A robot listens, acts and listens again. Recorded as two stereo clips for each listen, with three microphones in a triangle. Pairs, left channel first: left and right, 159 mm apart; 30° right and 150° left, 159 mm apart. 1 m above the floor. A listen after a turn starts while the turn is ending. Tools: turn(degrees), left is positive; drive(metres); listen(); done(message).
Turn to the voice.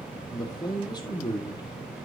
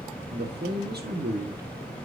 turn(degrees=155)
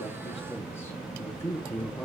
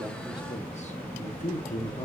turn(degrees=15)
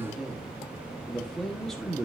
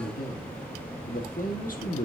done("Facing the man speaking, 1 to 2 m away.")